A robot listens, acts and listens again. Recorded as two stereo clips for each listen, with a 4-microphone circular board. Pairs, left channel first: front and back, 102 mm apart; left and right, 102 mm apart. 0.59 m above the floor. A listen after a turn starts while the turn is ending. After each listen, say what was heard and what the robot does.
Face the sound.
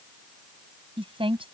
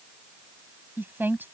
The woman speaking: 160° right. Turn 160° right.
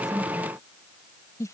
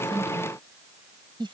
The woman speaking is now 55° right. Turn 55° right.
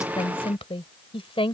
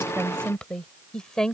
Found it: a woman speaking, straight ahead.